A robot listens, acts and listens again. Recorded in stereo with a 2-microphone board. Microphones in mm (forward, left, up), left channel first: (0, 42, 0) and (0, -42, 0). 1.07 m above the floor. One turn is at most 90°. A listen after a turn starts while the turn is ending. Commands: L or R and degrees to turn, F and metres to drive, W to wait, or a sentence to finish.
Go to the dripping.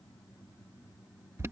W
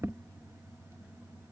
W
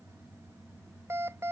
I can't make out dripping to turn to.